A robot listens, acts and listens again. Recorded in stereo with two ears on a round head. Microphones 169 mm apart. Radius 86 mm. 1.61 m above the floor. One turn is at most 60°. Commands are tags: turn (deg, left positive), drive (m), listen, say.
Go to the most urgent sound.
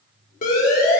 <turn deg="50"/>
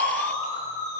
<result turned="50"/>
<turn deg="60"/>
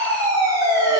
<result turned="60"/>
<turn deg="-20"/>
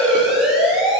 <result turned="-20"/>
<drive m="1.0"/>
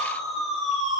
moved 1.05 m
<drive m="1.0"/>
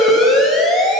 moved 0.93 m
<drive m="1.0"/>
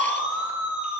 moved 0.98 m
<drive m="1.0"/>
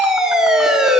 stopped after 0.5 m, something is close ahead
<say>I am next to the siren.</say>